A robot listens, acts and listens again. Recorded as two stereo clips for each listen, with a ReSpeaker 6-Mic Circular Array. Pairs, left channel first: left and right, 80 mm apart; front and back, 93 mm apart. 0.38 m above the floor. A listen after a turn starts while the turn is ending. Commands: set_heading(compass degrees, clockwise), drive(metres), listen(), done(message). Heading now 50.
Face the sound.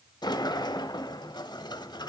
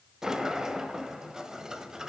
set_heading(310)
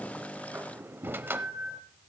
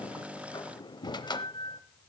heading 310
set_heading(340)
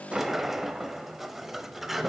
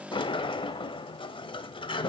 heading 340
done("Facing the sliding door.")